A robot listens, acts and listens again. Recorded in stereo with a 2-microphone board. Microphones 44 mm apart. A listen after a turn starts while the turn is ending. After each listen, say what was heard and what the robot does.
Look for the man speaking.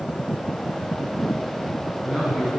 Turn 30° right.
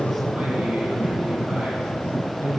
So it is at 150° right. Turn 150° right.
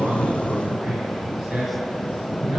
Found it: a man speaking, straight ahead, 2 to 4 m away.